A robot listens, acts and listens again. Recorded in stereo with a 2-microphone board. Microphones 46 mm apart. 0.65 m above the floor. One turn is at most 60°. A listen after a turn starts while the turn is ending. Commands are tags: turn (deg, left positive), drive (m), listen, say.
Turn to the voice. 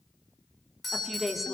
<turn deg="30"/>
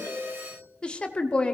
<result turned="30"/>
<turn deg="60"/>
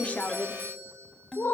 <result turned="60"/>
<turn deg="60"/>
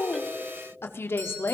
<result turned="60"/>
<turn deg="60"/>
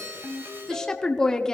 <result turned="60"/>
<turn deg="15"/>
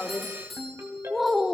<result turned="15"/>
<say>Facing the woman speaking.</say>